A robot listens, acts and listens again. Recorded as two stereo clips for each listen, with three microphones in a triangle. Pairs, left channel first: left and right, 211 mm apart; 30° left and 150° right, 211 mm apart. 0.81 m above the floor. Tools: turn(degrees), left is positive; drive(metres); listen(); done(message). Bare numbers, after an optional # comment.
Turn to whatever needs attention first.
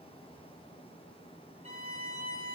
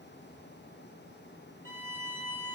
listen()
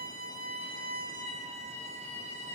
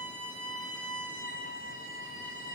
listen()
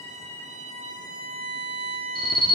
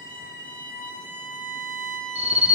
# The alarm: 155° left.
turn(155)
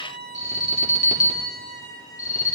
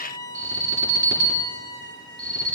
# The alarm is now 45° left.
turn(45)
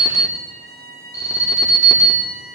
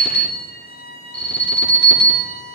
# The alarm is now 15° left.
turn(15)
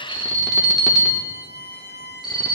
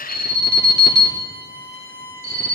done("Facing the alarm.")